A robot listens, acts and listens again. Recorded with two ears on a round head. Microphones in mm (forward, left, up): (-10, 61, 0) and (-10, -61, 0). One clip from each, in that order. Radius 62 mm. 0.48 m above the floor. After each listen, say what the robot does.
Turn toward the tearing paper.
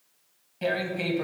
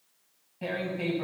Turn 55° left.
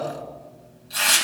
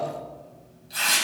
Facing the tearing paper, 2 to 4 m away.